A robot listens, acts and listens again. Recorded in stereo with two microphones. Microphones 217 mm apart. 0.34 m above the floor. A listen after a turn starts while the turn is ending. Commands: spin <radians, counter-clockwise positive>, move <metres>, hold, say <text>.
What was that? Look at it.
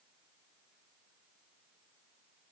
hold
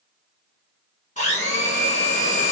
spin 0.61
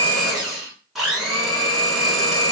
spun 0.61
say Found it: a blender, straight ahead.